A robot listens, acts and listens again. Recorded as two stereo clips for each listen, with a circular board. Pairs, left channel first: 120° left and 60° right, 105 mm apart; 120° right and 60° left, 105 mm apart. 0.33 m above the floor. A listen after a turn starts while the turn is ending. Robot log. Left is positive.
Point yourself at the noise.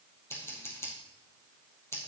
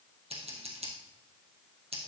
note: The scissors: 55° left.
cmd yaw +55
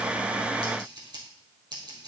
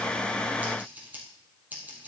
note: The scissors is now 15° right.
cmd yaw -15
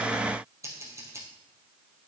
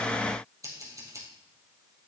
end: Found it: scissors, straight ahead, 2 to 4 m away.